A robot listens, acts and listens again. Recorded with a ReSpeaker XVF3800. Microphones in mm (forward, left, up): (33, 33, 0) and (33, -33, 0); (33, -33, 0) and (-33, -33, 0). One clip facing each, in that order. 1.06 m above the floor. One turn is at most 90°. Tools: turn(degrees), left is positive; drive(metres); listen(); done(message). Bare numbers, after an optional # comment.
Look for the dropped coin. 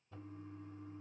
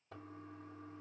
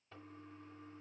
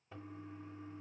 listen()
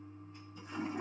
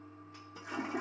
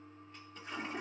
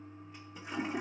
listen()
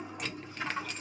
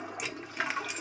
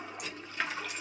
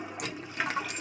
# The dropped coin: 170° right.
turn(-90)
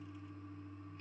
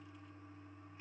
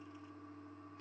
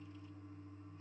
# Nothing new. It was at 80° right.
turn(-80)
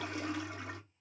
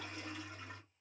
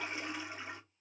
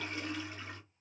done("Facing where the dropped coin came from. I can't hear it now.")